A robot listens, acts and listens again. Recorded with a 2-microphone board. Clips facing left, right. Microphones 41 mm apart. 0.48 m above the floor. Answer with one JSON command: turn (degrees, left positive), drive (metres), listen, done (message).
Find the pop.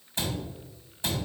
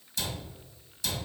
{"listen": true}
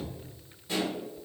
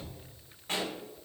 {"turn": -60}
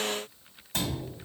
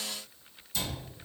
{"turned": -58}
{"listen": true}
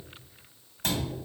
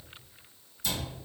{"done": "I heard a pop, but can't make it out now. It was about straight ahead or 65° right."}